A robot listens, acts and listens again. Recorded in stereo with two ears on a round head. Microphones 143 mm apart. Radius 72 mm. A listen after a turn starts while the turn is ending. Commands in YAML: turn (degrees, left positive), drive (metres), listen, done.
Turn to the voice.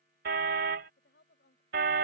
turn: 75
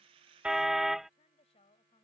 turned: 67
turn: 35
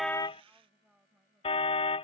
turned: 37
done: "Facing the woman speaking."